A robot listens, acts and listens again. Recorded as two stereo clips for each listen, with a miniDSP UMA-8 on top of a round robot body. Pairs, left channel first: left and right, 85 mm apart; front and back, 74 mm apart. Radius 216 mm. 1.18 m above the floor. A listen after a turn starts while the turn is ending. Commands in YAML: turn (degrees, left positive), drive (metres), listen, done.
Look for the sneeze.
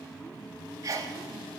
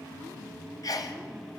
turn: -40
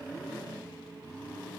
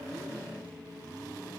done: "Facing where the sneeze came from. I can't hear it now."